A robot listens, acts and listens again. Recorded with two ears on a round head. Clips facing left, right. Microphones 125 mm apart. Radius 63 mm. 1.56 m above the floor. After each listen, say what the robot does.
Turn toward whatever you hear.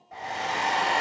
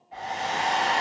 Turn 60° left.
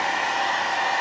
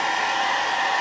Turn 55° left.
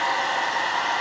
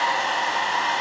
Turn 25° right.
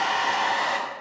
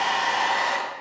Facing the hair dryer, 2 to 4 m away.